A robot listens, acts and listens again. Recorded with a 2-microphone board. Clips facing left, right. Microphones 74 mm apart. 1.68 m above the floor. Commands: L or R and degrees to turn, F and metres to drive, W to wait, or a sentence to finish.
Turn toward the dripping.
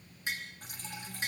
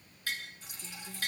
L50
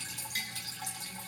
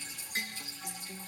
L80
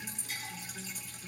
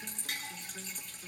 Facing the dripping, over 4 m away.